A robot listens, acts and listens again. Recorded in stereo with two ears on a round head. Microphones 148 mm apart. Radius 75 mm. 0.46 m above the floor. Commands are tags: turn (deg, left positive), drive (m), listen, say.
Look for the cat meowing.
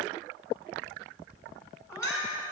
<turn deg="20"/>
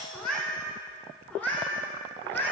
<turn deg="30"/>
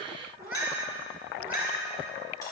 <turn deg="-10"/>
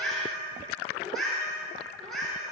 <say>Found it: a cat meowing, straight ahead, over 4 m away.</say>